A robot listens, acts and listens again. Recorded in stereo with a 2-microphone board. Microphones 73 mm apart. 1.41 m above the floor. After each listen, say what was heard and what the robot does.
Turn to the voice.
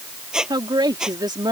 Turn 90° right.
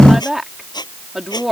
Facing the woman speaking.